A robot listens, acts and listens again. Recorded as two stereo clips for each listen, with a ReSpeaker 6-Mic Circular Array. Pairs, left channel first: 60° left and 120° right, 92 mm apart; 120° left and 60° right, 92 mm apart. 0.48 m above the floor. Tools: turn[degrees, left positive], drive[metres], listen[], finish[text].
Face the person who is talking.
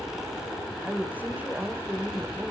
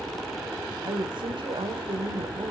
Thought: The woman speaking: 65° right.
Action: turn[-65]
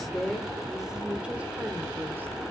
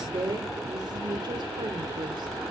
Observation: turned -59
Thought: The woman speaking is now 60° right.
Action: turn[-60]
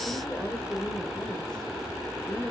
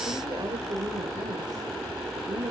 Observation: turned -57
Thought: The woman speaking is now 25° right.
Action: turn[-25]
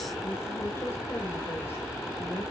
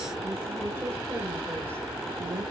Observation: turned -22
Action: finish[Facing the woman speaking.]